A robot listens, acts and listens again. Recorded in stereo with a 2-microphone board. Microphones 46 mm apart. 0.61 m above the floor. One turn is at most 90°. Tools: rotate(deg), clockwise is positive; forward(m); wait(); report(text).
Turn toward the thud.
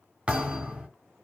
rotate(25)
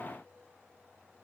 wait()
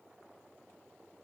report("I heard a thud, but can't make it out now. It was about straight ahead or 130° right.")